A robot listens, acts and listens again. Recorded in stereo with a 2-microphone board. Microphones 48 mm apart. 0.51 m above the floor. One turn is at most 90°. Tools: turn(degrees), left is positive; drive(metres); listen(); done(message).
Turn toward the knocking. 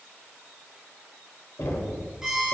turn(degrees=65)
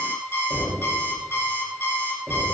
turn(degrees=20)
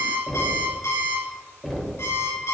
done("Found it: knocking, straight ahead, 1 to 2 m away.")